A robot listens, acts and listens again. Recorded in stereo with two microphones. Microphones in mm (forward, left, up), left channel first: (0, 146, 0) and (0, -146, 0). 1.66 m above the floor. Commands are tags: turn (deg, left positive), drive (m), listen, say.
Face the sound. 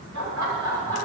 <turn deg="-90"/>
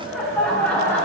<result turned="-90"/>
<say>Found it: laughter, straight ahead.</say>